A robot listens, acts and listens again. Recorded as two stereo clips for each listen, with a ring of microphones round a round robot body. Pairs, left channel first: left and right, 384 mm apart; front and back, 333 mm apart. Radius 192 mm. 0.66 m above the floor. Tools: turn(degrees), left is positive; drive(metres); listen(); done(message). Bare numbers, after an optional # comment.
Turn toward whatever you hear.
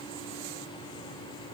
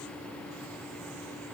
listen()
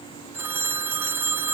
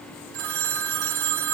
# The phone ringing: 175° right.
turn(-175)
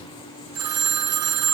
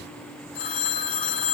# The phone ringing is now 35° right.
turn(-35)
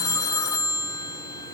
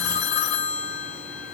# The phone ringing is now 10° left.
turn(10)
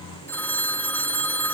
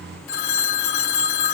done("Found it: a phone ringing, straight ahead.")